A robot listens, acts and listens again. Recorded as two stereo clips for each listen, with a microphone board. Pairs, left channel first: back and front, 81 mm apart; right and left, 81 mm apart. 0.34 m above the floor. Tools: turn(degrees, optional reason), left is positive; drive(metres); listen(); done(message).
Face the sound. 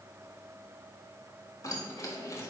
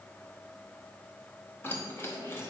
turn(degrees=-140, reason="The keys jangling: 140° right.")
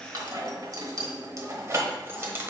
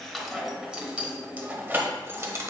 turn(degrees=55, reason="The keys jangling is now 55° left.")
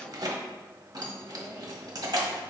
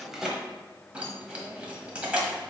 turn(degrees=20, reason="The keys jangling is now 20° left.")
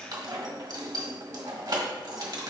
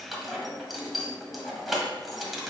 done("Facing the keys jangling, 1 to 2 m away.")